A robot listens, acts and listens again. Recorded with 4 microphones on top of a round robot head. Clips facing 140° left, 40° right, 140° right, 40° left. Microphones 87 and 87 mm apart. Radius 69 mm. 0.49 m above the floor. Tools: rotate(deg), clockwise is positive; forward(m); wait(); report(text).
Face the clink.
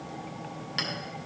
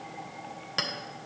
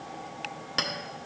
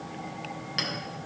rotate(90)
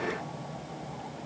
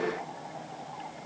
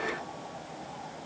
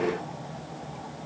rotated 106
rotate(-15)
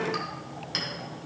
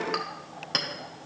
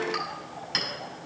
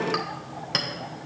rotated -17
report("Found it: a clink, straight ahead, 1 to 2 m away.")